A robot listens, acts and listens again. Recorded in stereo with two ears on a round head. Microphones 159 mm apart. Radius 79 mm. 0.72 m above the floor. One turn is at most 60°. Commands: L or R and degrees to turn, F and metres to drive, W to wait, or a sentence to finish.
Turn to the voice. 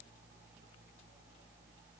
W
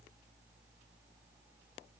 W
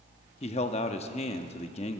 L35
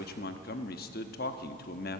L60
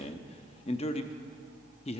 L45
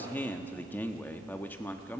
L15
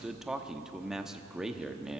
Found it: a man speaking, straight ahead.